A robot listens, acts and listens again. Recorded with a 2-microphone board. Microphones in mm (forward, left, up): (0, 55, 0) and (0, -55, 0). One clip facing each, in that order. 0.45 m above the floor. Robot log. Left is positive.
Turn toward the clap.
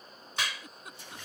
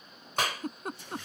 note: The clap: about 45° right or 135° right.
cmd yaw -45
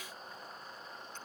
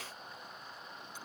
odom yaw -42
cmd idle
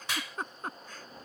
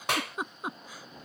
note: So it is at 80° right.
cmd yaw -80
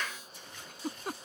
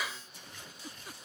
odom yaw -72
note: The clap is now 10° right.
cmd yaw -10
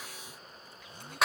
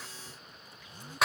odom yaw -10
end: Found it: a clap, straight ahead.